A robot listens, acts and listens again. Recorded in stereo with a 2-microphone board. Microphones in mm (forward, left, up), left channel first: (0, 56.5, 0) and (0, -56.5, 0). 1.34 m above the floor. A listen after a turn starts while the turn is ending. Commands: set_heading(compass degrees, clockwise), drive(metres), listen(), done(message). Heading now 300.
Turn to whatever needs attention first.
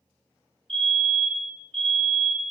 set_heading(355)
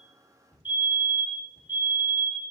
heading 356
set_heading(11)
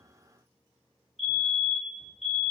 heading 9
done("Found it: a fire alarm, straight ahead.")